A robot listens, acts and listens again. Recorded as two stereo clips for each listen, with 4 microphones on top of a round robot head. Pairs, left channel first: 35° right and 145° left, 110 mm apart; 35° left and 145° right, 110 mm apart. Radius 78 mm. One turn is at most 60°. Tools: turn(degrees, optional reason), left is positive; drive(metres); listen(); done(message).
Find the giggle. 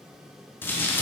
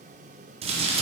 listen()
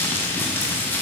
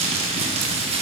listen()
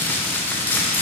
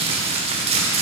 done("I can't make out a giggle to turn to.")